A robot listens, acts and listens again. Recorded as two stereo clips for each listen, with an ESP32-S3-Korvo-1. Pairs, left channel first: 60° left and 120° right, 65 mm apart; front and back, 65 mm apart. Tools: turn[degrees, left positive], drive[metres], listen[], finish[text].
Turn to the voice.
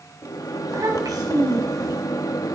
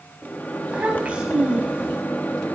Thought: The child speaking: 110° right.
Action: turn[-110]
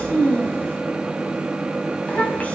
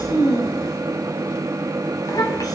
Action: finish[Facing the child speaking.]